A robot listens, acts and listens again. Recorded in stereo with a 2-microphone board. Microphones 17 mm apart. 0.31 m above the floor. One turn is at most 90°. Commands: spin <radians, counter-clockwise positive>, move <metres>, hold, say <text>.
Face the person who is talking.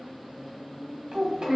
spin -0.79
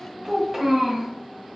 spin -0.17
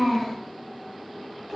say Found it: a child speaking, straight ahead.